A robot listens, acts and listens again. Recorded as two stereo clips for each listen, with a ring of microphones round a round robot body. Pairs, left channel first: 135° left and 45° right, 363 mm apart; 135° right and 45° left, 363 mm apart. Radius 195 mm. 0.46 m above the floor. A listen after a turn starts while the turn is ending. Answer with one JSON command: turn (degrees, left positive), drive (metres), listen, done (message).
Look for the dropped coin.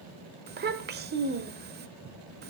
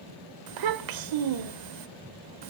{"listen": true}
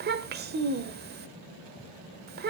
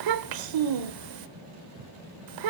{"listen": true}
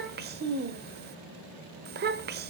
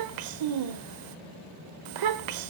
{"done": "I can't make out a dropped coin to turn to."}